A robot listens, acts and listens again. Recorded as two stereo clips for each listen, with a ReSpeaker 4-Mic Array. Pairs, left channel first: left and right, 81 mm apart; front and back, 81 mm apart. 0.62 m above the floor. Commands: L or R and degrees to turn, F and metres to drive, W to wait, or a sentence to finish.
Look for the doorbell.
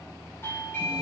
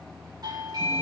L150
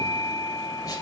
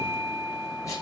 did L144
Facing the doorbell.